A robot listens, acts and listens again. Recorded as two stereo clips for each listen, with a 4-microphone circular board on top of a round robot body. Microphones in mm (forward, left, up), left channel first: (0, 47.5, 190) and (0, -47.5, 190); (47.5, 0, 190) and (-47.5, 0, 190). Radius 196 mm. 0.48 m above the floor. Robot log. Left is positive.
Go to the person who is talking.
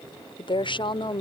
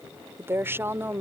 note: The woman speaking: 115° left.
cmd yaw +115
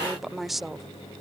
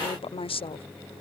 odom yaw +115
cmd fwd 1.0
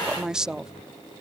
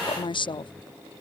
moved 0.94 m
note: The woman speaking is now 10° right.
cmd yaw -10
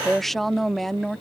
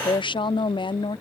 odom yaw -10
cmd fwd 1.0
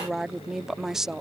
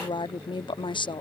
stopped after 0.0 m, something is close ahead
end: I am next to the woman speaking.